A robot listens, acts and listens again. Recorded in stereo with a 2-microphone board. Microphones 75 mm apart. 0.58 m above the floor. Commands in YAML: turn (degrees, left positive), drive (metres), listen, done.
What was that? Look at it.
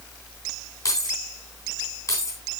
turn: 45
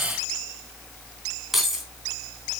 done: "Found it: keys jangling, straight ahead."